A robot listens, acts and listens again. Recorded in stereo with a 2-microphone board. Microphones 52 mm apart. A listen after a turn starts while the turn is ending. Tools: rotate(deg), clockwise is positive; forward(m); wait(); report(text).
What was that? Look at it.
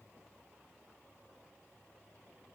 wait()
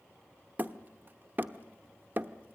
rotate(35)
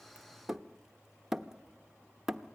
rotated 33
rotate(10)
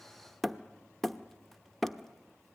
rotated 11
report("Found it: hammering, straight ahead, under 1 m away.")